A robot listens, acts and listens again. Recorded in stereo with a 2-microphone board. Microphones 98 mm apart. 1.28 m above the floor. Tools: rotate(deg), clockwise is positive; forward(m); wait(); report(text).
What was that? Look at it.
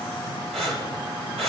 rotate(90)
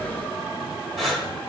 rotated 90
report("Facing the breathing.")